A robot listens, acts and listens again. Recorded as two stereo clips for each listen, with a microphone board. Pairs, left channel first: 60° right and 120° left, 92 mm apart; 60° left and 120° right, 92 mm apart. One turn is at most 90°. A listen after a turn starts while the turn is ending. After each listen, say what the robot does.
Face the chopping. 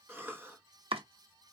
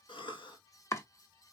Turn 90° left.
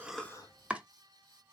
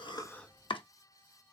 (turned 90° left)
Turn 45° left.
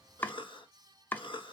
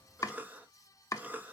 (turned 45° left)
Turn 10° left.
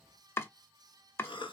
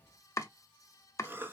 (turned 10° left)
Facing the chopping.